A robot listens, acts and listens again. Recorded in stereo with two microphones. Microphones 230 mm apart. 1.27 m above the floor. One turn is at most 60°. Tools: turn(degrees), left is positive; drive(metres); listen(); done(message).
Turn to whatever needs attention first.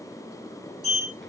listen()
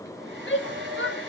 turn(degrees=55)
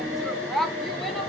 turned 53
done("Found it: a shout, straight ahead.")